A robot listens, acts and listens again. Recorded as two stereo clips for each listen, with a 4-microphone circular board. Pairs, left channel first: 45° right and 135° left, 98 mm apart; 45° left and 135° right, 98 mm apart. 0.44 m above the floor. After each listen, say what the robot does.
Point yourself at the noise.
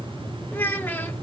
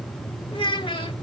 Turn 20° left.
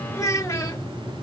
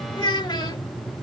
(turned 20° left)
Turn 10° left.
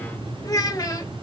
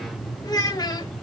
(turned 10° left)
Found it: a child speaking, straight ahead, 1 to 2 m away.